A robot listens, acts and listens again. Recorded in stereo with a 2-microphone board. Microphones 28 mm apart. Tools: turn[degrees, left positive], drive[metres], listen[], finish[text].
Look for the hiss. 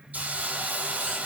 Thought: The hiss: about 65° right or 115° right.
Action: turn[-65]
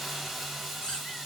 Action: finish[Facing the hiss.]